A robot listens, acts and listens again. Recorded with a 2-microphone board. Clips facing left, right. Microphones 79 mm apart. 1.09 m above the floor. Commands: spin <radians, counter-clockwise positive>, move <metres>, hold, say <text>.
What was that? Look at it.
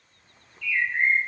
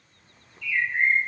spin -0.52
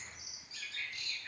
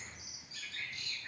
spin -2.27
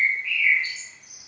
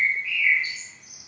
spin -0.17
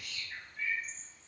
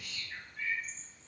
say Found it: a bird, straight ahead, under 1 m away.